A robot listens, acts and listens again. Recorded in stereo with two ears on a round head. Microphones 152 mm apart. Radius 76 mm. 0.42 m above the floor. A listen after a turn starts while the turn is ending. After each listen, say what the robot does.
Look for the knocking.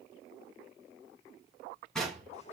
Turn 30° left.
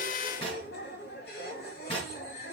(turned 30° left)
Turn 145° left.
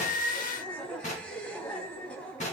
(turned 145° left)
Turn 45° left.
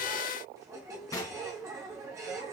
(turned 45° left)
Turn 20° left.
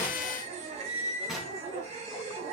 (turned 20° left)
Facing the knocking.